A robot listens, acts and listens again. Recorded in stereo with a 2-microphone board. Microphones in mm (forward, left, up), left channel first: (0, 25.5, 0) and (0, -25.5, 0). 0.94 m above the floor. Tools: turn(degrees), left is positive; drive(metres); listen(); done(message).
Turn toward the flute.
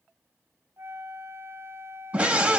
turn(degrees=-55)
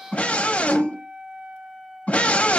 turn(degrees=-20)
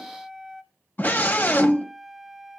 done("Found it: a flute, straight ahead.")